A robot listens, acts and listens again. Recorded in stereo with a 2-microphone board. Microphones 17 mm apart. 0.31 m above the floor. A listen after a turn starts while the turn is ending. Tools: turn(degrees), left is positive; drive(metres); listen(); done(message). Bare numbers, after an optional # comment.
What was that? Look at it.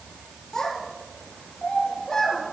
# The child speaking: about 35° left or 145° left.
turn(35)
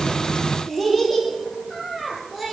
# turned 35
# So it is at 10° right.
turn(-10)
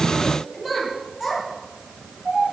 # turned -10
# The child speaking is now 15° right.
turn(-15)
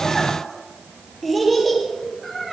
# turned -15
done("Facing the child speaking.")